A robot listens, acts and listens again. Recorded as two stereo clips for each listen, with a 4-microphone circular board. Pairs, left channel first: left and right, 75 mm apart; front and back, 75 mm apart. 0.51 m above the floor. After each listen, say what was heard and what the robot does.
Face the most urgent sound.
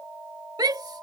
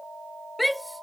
The shout: 90° right. Turn 90° right.
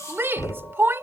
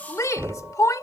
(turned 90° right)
The shout is now 35° right. Turn 35° right.
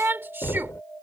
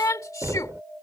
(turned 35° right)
The shout is now 35° right. Turn 35° right.
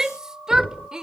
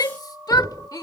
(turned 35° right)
The shout is now 10° right. Turn 10° right.
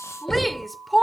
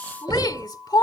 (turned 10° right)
Facing the shout.